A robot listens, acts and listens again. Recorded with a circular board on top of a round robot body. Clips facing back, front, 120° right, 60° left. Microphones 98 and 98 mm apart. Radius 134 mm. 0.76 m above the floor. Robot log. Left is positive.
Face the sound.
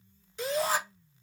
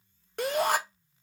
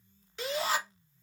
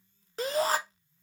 note: The shout: 15° left.
cmd yaw +15
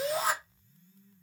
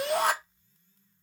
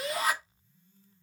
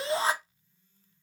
end: Facing the shout.